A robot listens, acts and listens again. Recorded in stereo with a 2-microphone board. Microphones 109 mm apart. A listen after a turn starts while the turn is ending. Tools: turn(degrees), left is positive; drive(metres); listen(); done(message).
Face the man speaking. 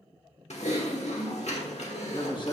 turn(degrees=40)
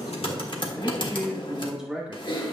turn(degrees=-15)
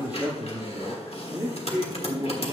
turn(degrees=-30)
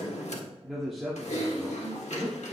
done("Facing the man speaking, 2 to 4 m away.")